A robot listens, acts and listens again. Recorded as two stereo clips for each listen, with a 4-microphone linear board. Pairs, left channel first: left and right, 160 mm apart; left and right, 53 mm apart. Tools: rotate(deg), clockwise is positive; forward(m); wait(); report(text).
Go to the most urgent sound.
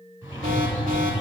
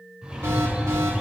rotate(60)
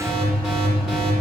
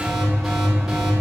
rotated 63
forward(1.0)
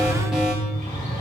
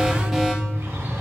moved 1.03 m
forward(1.0)
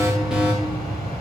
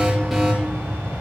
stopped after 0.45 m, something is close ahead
report("I am next to the alarm.")